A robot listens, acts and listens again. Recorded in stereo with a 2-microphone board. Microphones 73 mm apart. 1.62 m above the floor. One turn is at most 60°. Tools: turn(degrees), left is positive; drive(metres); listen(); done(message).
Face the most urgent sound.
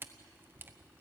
listen()
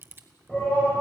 turn(degrees=15)
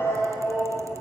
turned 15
turn(degrees=60)
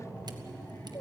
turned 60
turn(degrees=60)
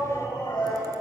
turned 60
turn(degrees=60)
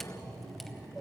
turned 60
turn(degrees=10)
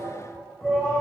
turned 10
done("Found it: a shout, straight ahead, over 4 m away.")